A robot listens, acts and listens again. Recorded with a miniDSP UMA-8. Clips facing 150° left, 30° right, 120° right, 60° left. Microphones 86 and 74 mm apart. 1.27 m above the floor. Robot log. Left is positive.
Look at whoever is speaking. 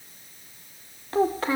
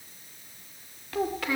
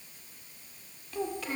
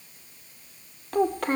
note: The child speaking: 90° left.
cmd yaw +90
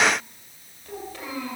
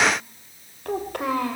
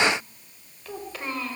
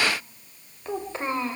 end: Facing the child speaking.